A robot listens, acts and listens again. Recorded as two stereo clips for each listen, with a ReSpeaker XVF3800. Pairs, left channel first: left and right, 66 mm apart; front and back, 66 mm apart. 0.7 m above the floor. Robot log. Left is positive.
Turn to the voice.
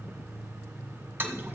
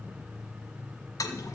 cmd idle
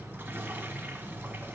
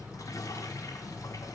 cmd idle
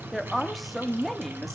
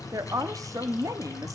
note: The woman speaking: straight behind.
cmd yaw +180
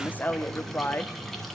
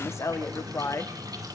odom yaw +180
note: The woman speaking is now 30° left.
cmd yaw +30
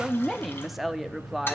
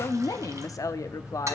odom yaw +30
end: Found it: a woman speaking, straight ahead.